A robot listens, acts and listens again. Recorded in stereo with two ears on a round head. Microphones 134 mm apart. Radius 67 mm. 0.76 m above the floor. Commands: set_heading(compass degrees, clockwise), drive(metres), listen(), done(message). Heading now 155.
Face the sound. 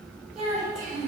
set_heading(125)
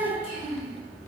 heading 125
set_heading(355)
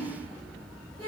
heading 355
set_heading(25)
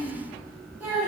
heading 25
set_heading(40)
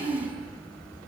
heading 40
done("Found it: a child speaking, straight ahead, 2 to 4 m away.")